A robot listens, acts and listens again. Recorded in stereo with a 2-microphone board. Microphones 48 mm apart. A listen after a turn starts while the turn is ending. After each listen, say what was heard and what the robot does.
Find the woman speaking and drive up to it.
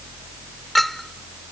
Keep listening.
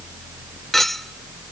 Keep listening.
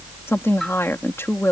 The woman speaking: about 60° left or 120° left. Turn 60° left.
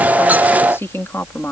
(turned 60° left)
So it is at 60° left. Turn 60° left.
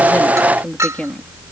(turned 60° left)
The woman speaking is now 25° left. Turn 25° left.
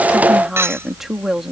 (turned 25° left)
Drive 1.0 m forward.
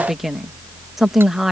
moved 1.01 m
Drive 1.0 m forward.
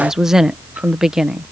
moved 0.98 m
The woman speaking is now 10° right. Turn 10° right.
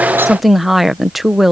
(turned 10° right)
Drive 1.0 m forward.
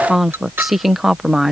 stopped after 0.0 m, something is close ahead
Arrived at the woman speaking, straight ahead.